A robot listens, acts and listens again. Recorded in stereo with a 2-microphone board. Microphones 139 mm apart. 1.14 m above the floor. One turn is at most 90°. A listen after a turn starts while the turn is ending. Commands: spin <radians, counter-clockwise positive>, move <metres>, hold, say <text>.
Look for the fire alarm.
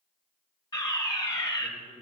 spin 0.52
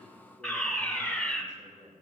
say Found it: a fire alarm, straight ahead.